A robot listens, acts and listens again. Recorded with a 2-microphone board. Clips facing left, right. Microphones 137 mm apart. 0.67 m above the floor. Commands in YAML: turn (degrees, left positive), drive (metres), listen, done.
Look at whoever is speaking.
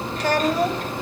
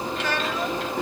turn: 40
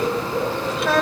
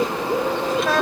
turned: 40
done: "Found it: a child speaking, straight ahead, 2 to 4 m away."